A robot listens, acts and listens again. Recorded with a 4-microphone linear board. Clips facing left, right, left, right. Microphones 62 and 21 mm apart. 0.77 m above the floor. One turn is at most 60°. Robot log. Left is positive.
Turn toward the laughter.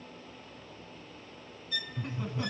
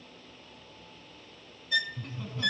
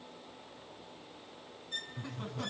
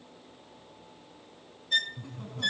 note: The laughter: about 20° left or 160° left.
cmd yaw +20
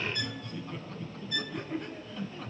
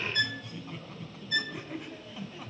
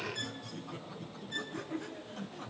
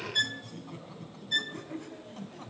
note: So it is at 10° right.
cmd yaw -10
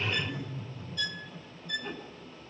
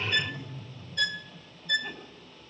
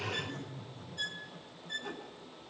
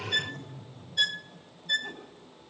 end: Facing the laughter, over 4 m away.